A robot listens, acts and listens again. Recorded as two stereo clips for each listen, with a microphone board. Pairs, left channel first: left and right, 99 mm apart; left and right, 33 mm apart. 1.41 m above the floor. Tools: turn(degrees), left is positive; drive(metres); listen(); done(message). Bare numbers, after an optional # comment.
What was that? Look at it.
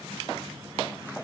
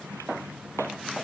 listen()
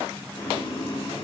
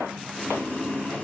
# The boiling: about 70° left or 110° left.
turn(70)
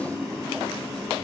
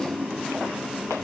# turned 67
done("Facing the boiling.")